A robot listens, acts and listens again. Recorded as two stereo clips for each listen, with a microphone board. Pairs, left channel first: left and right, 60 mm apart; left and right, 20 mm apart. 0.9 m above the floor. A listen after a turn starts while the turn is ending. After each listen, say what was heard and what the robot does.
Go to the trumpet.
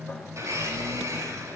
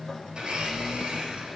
Keep listening.
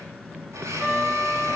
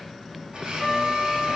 Turn 30° right.
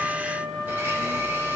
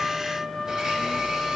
So it is at 25° left. Turn 25° left.
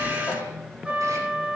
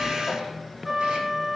The trumpet is now 15° right. Turn 15° right.
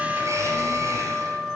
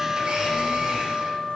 Drive 1.0 m forward.
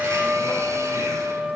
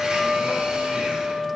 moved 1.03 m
Drive 1.0 m forward.
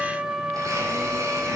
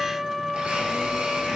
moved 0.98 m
The trumpet is now 15° right. Turn 15° right.
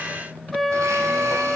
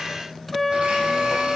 Drive 1.0 m forward.
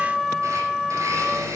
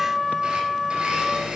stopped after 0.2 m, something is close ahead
I am next to the trumpet.